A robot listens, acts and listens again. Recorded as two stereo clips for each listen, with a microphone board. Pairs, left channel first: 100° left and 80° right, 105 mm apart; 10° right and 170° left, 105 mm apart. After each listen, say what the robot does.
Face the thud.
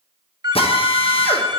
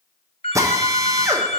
Keep listening.
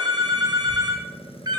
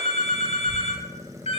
Turn 35° left.
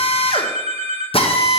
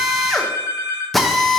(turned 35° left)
I heard a thud from this way, but can't make it out now.